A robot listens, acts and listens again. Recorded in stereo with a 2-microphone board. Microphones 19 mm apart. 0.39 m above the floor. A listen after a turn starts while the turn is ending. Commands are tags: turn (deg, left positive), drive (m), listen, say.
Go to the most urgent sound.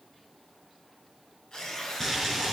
<listen/>
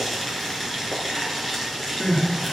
<turn deg="50"/>
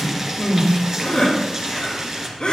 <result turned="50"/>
<turn deg="75"/>
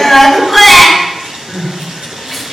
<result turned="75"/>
<turn deg="-15"/>
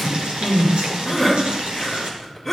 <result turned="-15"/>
<drive m="1.0"/>
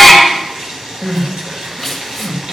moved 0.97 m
<drive m="1.0"/>
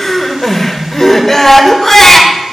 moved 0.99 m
<turn deg="25"/>
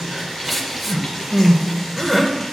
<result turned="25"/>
<turn deg="-20"/>
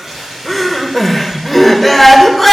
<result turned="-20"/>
<drive m="1.0"/>
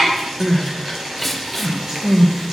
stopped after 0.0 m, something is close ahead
<say>I am next to the crying.</say>